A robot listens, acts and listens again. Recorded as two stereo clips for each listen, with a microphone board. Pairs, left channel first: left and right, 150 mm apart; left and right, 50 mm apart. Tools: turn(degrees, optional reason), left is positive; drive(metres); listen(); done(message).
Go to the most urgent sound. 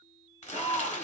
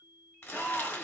turn(degrees=35, reason="The shout: about 35° left or 145° left.")
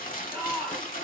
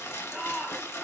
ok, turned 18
turn(degrees=20, reason="So it is at 20° left.")
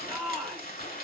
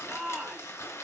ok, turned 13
drive(metres=1.0)
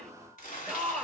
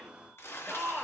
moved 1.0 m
drive(metres=1.0)
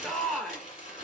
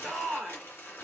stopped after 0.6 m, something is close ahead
done("Arrived at the shout, straight ahead.")